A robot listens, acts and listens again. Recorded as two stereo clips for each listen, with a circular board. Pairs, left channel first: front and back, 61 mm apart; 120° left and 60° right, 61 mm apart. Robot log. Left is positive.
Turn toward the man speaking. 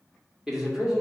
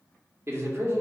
note: The man speaking: 95° right.
cmd yaw -95
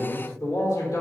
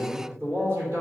note: The man speaking is now 10° right.
cmd yaw -10
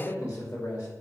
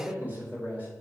end: Found it: a man speaking, straight ahead, 2 to 4 m away.